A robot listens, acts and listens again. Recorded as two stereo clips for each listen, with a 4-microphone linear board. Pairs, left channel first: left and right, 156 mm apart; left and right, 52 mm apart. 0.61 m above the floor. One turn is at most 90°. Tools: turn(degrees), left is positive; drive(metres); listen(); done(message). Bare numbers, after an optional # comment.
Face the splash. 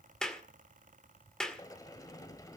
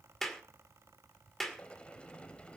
listen()
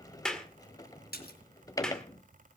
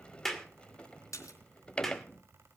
turn(90)
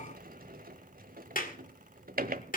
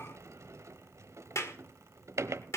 done("I heard a splash from this way, but can't make it out now.")